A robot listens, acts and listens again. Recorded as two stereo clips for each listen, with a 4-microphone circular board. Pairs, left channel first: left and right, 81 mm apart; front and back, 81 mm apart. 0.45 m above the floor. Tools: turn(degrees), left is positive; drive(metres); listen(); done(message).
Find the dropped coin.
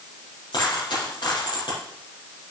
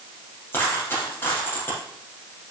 turn(degrees=65)
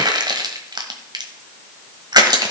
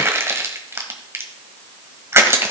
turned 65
done("I heard a dropped coin from this way, but can't make it out now.")